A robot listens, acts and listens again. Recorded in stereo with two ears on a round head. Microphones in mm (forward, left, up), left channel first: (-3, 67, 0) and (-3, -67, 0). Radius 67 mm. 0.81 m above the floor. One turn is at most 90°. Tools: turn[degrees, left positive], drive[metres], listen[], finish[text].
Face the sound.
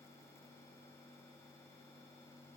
Action: listen[]
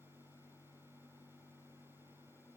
Action: listen[]
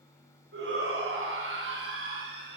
Action: turn[-90]
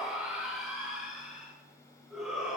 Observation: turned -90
Action: finish[Facing the shout, over 4 m away.]